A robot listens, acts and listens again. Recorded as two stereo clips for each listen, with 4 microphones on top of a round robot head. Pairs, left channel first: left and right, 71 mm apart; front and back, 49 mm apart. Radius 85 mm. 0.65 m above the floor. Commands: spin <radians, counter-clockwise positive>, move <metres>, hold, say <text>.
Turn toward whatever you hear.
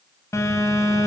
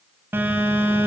spin 2.36
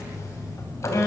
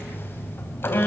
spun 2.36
spin 0.61
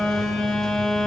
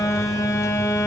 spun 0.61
say Facing the phone buzzing, 2 to 4 m away.